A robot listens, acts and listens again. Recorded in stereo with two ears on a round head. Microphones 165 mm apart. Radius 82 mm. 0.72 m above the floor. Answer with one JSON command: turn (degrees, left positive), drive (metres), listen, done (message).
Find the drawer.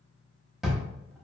{"turn": 30}
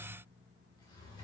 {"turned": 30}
{"listen": true}
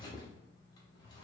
{"turn": 150}
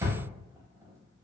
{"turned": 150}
{"turn": -20}
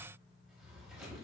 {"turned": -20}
{"listen": true}
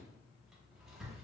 {"done": "Found it: a drawer, straight ahead."}